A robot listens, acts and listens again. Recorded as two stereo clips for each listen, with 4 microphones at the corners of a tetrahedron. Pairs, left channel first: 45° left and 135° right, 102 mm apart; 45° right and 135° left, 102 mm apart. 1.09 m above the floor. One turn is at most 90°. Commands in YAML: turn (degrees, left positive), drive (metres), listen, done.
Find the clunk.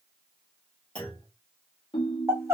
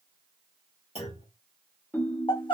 turn: -35
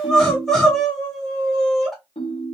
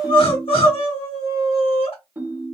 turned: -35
done: "Facing where the clunk came from. I can't hear it now."